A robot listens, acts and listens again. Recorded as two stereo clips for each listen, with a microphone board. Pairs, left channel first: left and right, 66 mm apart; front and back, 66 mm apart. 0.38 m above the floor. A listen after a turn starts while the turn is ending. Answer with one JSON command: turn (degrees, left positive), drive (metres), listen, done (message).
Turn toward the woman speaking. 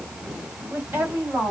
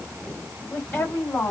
{"turn": -45}
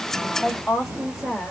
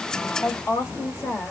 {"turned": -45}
{"done": "Found it: a woman speaking, straight ahead, 1 to 2 m away."}